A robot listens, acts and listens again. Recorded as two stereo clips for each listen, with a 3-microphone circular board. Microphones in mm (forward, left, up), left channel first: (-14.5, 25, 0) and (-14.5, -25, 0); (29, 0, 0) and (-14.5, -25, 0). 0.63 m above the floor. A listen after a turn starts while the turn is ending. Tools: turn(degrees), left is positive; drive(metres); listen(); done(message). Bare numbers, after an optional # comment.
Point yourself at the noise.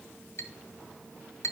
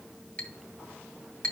# The clink: 95° left.
turn(95)
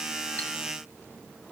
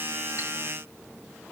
listen()
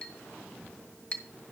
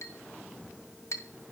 # The clink is now 20° left.
turn(20)
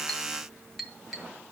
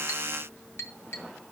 done("Found it: a clink, straight ahead, 1 to 2 m away.")